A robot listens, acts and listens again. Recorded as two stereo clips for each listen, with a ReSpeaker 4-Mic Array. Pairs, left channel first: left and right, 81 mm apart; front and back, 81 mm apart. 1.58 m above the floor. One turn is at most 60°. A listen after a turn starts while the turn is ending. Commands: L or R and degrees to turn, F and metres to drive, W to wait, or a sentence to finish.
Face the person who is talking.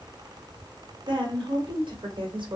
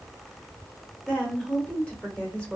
R60
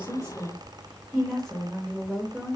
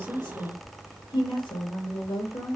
Facing the woman speaking, 1 to 2 m away.